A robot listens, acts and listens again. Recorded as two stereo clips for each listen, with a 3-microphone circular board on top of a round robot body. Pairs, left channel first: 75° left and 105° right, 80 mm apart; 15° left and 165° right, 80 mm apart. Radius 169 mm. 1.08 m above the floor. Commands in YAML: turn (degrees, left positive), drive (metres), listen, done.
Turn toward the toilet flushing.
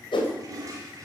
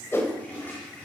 turn: -60
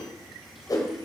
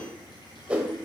listen: true
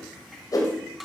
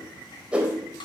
turn: -15
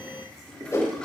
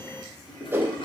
done: "Found it: a toilet flushing, straight ahead."